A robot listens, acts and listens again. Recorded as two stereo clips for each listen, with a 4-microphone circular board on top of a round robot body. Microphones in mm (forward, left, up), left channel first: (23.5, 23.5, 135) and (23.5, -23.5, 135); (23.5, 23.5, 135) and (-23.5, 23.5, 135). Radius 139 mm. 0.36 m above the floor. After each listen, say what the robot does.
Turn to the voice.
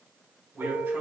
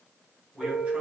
Turn 120° right.
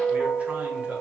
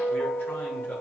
Keep listening.
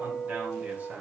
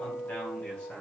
Turn 45° right.
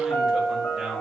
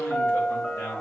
Turn 15° right.
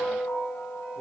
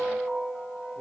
Keep listening.
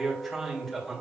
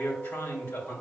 Found it: a man speaking, straight ahead.